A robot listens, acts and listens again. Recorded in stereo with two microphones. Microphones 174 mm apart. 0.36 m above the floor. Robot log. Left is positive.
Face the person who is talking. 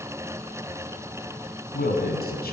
note: The man speaking: about 65° left or 115° left.
cmd yaw +65
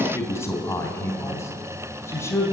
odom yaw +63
note: So it is at 15° left.
cmd yaw +15
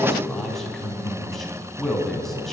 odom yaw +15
end: Facing the man speaking.